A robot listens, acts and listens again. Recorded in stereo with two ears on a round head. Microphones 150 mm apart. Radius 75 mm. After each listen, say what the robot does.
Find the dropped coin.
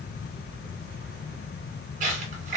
Turn 45° right.
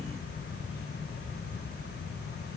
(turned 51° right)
Keep listening.
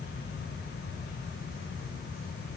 I heard a dropped coin, but can't make it out now. It was about 5° left or 80° right.